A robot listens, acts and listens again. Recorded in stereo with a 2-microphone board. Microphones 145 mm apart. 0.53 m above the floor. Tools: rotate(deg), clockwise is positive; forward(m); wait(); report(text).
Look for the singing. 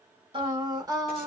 rotate(25)
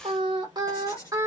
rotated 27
rotate(20)
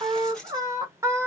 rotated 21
rotate(15)
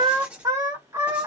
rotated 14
rotate(20)
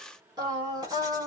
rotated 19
rotate(25)
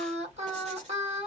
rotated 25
rotate(130)
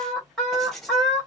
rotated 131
report("Facing the singing, 2 to 4 m away.")